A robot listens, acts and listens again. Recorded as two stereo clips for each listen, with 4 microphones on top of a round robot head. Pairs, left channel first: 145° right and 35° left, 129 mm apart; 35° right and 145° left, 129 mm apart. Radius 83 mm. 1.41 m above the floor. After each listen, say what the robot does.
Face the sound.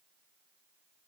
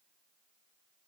Keep listening.
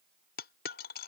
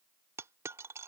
Turn 145° right.
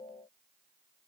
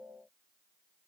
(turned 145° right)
Facing where the dropped coin came from. I can't hear it now.